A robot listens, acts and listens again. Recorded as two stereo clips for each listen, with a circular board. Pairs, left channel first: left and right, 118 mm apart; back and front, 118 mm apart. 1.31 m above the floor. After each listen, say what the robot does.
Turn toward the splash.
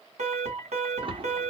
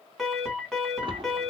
Turn 45° right.
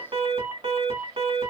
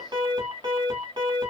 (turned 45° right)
Facing where the splash came from. I can't hear it now.